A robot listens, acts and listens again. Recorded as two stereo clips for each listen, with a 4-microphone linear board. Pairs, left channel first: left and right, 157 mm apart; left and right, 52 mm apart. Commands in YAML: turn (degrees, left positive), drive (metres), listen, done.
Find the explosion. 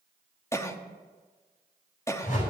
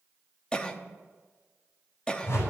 listen: true
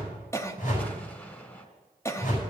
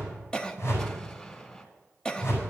turn: 30
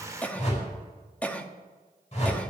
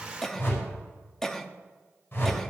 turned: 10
listen: true
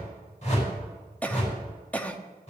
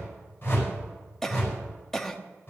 done: "I heard an explosion, but can't make it out now. It was about 5° left or 155° left."